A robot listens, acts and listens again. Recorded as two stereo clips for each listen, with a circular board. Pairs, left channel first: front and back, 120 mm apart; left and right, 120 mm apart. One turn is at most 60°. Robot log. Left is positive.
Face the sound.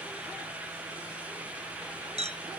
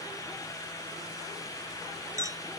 note: The clink: 155° right.
cmd yaw -60
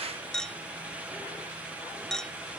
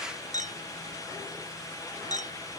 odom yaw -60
note: The clink is now 85° right.
cmd yaw -60
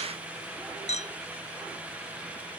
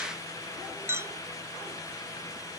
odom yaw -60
note: The clink is now 20° right.
cmd yaw -20
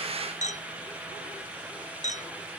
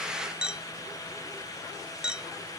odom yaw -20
end: Found it: a clink, straight ahead.